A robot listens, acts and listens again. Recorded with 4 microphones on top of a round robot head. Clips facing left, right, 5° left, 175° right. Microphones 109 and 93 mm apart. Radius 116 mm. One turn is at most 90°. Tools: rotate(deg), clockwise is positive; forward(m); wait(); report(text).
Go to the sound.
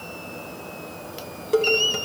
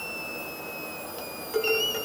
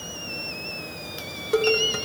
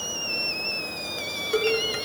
rotate(-80)
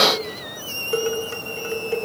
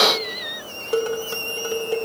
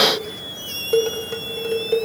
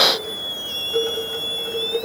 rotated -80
rotate(20)
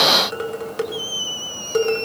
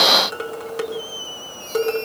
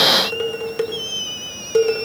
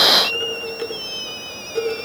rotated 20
forward(1.0)
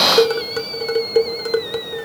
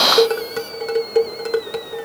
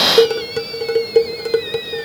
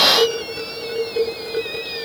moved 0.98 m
forward(1.0)
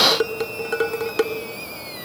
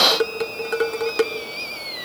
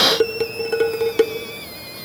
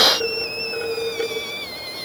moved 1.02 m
forward(1.0)
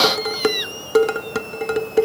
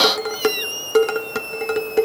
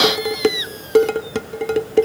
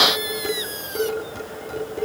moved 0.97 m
forward(1.0)
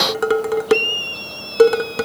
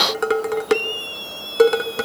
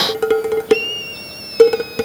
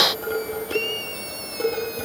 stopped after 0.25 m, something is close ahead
report("I am next to the dishes clattering.")